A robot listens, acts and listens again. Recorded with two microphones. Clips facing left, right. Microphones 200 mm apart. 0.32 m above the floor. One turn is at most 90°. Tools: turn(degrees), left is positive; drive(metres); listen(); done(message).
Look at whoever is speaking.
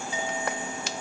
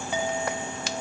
listen()
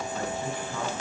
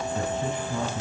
turn(degrees=-20)
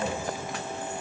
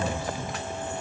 listen()
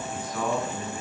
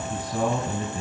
turn(degrees=-90)
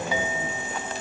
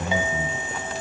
turn(degrees=-80)
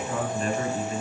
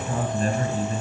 turn(degrees=-40)
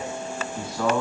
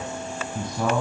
turn(degrees=-15)
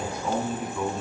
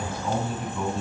done("Found it: a man speaking, straight ahead, 2 to 4 m away.")